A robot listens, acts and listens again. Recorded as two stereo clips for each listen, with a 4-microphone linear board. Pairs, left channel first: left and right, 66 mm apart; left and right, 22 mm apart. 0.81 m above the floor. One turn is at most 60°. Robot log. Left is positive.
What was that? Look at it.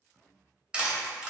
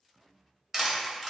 cmd yaw -30
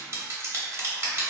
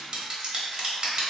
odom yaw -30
note: So it is at 135° right.
cmd yaw -60
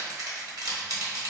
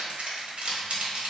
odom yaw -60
note: The crushing is now 95° right.
cmd yaw -60
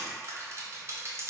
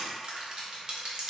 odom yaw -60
note: The crushing is now 50° right.
cmd yaw -50
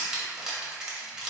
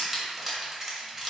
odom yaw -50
note: The crushing is now 10° right.
cmd yaw -10
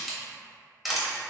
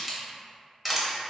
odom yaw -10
end: Found it: crushing, straight ahead, under 1 m away.